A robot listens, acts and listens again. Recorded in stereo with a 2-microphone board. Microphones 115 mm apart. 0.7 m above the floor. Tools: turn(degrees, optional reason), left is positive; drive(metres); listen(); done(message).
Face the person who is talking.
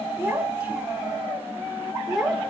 turn(degrees=30)
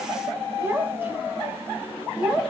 turn(degrees=-30)
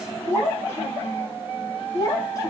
turn(degrees=30, reason="So it is at 30° left.")
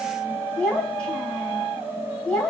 turn(degrees=10, reason="The child speaking is now 10° left.")
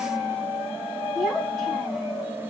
done("Found it: a child speaking, straight ahead, 2 to 4 m away.")